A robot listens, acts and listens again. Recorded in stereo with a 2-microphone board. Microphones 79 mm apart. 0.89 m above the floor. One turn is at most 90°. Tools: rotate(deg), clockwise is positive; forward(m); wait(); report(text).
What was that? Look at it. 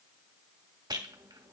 rotate(65)
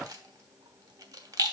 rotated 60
rotate(55)
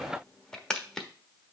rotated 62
report("Facing the rattle.")